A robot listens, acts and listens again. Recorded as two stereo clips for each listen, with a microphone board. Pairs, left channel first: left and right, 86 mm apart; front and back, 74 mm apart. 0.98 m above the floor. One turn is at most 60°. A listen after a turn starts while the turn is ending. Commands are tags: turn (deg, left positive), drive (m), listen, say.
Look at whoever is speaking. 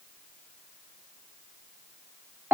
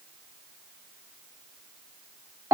<listen/>
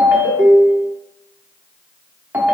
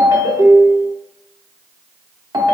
<listen/>
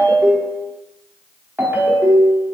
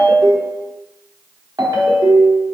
<say>I can't make out anyone speaking to turn to.</say>